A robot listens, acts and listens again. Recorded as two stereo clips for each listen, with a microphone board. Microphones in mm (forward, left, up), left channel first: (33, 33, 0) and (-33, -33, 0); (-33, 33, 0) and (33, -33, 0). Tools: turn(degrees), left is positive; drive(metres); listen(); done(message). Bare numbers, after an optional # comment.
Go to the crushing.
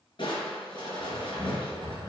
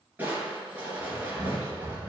# The crushing: 25° left.
turn(25)
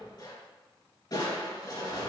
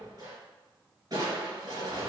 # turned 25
drive(1.0)
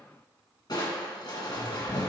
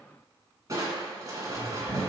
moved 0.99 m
drive(1.0)
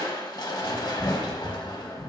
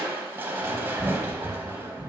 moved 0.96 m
# The crushing is now 15° left.
turn(15)
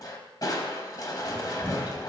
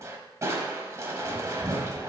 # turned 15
drive(1.0)
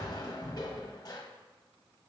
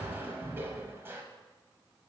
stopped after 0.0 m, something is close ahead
# The crushing is now 15° left.
turn(15)
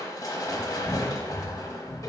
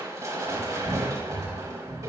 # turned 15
done("I am next to the crushing.")